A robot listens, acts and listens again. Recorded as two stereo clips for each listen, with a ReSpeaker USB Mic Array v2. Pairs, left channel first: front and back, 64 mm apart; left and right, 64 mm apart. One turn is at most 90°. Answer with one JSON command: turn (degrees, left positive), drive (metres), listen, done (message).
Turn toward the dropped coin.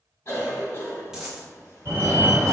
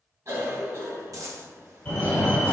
{"turn": -90}
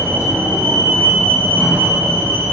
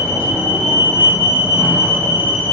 {"turn": -10}
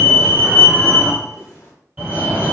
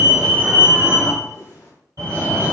{"done": "I heard a dropped coin from this way, but can't make it out now."}